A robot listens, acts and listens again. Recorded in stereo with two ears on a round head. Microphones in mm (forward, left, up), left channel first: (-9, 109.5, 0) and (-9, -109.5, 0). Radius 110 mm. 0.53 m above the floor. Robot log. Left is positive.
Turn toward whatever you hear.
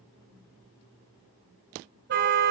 note: The car horn: about 50° right or 130° right.
cmd yaw -50
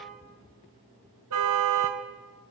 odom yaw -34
note: So it is at 100° right.
cmd yaw -100
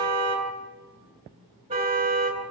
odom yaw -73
note: The car horn is now 25° right.
cmd yaw -25
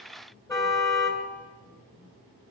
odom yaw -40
note: The car horn is now 15° left.
cmd yaw +15
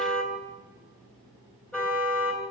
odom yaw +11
end: Found it: a car horn, straight ahead.